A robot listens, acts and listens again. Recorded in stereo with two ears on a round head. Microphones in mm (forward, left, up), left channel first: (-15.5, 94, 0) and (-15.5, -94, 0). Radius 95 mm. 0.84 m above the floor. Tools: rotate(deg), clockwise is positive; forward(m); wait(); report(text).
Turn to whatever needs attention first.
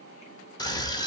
rotate(-20)
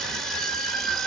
report("Facing the scream, under 1 m away.")